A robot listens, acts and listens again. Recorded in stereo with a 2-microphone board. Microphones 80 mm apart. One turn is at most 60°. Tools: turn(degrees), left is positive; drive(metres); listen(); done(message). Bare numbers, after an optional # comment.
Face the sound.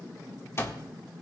# The alarm clock: about 35° left or 145° left.
turn(35)
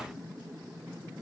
listen()
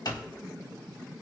# So it is at 100° left.
turn(60)
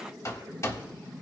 # The alarm clock is now 45° left.
turn(45)
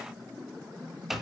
done("Facing the alarm clock.")